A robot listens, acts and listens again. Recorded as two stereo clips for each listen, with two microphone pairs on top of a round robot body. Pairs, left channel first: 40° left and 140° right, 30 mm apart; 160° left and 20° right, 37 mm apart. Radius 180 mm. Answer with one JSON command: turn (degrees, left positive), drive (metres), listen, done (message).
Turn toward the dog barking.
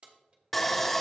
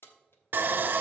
{"listen": true}
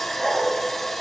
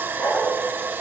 {"turn": 130}
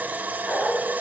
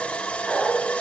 {"turn": 45}
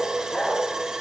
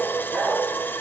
{"done": "Facing the dog barking, 2 to 4 m away."}